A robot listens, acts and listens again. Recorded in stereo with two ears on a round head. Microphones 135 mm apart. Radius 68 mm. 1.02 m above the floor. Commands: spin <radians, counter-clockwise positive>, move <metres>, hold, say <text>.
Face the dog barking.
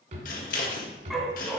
spin 0.52
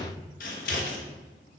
hold
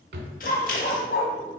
spin 2.09
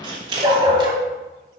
spin -0.61
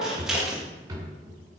spin -0.26
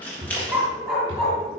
say Found it: a dog barking, straight ahead.